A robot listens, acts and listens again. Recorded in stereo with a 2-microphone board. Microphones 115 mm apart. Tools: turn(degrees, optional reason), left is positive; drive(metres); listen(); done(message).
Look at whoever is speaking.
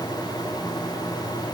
listen()
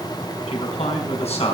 turn(degrees=75, reason="The man speaking: about 75° left or 105° left.")
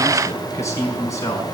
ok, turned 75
turn(degrees=30, reason="So it is at 30° left.")
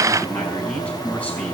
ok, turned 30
turn(degrees=10, reason="The man speaking is now 10° left.")
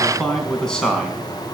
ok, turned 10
done("Facing the man speaking, over 4 m away.")